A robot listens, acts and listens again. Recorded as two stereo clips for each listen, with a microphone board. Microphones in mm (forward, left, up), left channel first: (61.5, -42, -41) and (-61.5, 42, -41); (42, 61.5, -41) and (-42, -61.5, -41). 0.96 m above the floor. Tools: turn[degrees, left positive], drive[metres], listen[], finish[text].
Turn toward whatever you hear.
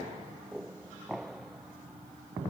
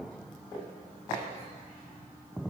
Action: listen[]
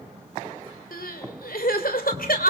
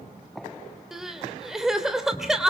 Thought: The crying: 35° right.
Action: turn[-35]
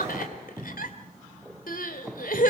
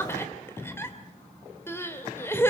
Thought: The crying is now 20° right.
Action: turn[-20]
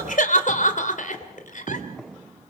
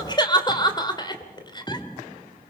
Action: finish[Found it: crying, straight ahead, 2 to 4 m away.]